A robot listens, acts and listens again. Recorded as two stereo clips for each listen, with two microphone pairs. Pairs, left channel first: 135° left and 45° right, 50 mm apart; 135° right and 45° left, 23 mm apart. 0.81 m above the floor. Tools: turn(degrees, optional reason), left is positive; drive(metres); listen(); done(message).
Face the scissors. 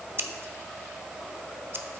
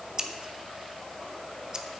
done("Facing the scissors, under 1 m away.")